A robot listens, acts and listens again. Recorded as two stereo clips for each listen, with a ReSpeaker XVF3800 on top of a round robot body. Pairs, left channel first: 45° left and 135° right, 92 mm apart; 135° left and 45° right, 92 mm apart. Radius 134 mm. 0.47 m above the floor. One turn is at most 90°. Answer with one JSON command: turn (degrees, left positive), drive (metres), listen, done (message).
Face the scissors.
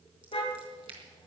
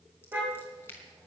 {"turn": -90}
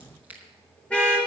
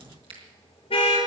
{"turn": -65}
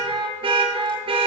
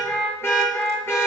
{"listen": true}
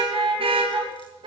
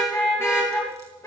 {"listen": true}
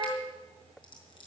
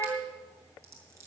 {"turn": 15}
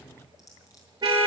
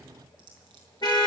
{"done": "Facing the scissors."}